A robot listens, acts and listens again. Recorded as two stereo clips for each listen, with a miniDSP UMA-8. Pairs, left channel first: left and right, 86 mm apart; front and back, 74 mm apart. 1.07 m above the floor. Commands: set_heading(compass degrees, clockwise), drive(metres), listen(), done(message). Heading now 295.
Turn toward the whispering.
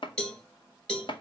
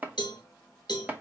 listen()
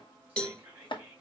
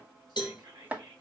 set_heading(95)
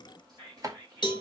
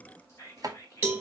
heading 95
set_heading(145)
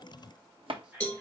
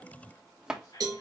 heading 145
set_heading(155)
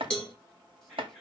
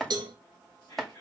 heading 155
done("Found it: whispering, straight ahead, 2 to 4 m away.")